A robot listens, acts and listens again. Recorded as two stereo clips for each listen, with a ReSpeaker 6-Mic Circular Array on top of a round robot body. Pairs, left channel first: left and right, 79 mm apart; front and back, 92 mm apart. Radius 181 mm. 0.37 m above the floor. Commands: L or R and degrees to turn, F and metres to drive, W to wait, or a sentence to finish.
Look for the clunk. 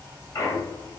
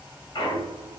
L40
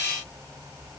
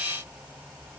I heard a clunk from this way, but can't make it out now.